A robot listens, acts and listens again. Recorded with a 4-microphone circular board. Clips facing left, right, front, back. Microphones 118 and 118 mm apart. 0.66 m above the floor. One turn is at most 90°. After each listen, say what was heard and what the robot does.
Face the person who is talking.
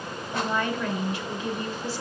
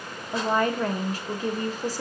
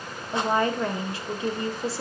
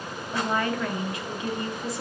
The woman speaking: 50° right. Turn 50° right.
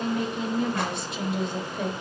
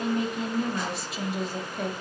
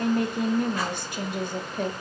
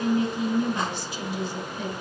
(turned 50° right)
Found it: a woman speaking, straight ahead.